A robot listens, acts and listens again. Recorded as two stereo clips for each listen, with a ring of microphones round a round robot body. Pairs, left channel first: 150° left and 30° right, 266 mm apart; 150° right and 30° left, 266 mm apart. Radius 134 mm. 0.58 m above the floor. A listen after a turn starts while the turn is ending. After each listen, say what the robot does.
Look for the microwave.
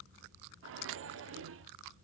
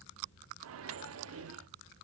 Found it: a microwave, straight ahead, under 1 m away.